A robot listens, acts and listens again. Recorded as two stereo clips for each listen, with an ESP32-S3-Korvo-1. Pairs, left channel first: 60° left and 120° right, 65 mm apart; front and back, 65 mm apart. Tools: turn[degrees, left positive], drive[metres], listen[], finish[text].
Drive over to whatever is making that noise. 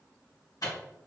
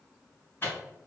Thought: The microwave: 50° left.
Action: turn[50]
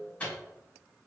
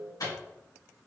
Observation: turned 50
Thought: The microwave is now 10° right.
Action: turn[-10]
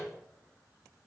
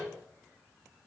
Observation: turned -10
Action: drive[1.0]
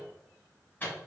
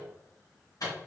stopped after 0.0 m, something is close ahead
Action: finish[Something is in my way. I am facing the microwave but have not reached it.]